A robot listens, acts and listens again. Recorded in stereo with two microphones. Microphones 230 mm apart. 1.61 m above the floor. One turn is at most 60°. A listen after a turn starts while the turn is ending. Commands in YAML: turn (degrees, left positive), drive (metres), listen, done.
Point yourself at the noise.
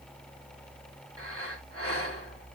turn: -60
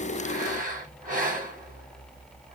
turn: -35
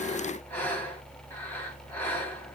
turn: 10
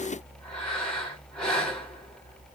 done: "Found it: breathing, straight ahead, 2 to 4 m away."